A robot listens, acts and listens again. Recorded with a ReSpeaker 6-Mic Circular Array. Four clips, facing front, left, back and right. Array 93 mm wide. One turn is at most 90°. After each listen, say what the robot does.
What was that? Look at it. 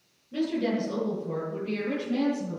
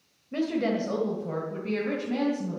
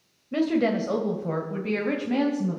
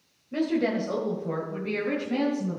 Turn 90° left.
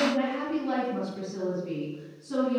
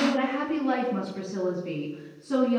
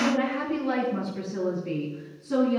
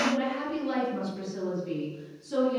Turn 90° left.
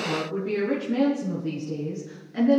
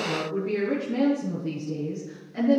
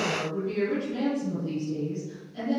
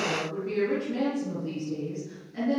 Turn 10° left.
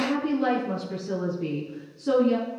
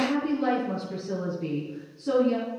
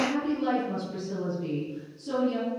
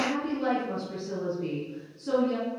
Found it: a woman speaking, straight ahead.